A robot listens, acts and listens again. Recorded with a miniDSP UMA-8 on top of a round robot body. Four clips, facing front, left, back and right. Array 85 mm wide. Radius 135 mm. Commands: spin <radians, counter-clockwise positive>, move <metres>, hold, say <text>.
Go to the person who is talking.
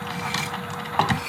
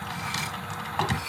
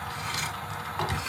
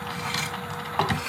hold
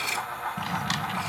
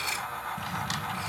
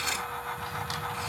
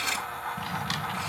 hold
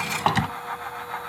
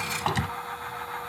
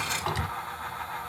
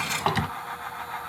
say I can't make out anyone speaking, only cutlery clinking and a drawer.